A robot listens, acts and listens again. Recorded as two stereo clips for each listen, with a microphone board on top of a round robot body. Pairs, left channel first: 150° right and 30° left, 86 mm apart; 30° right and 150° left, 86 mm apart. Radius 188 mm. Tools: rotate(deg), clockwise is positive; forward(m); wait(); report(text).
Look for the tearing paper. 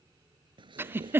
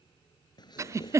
report("Found it: tearing paper, straight ahead.")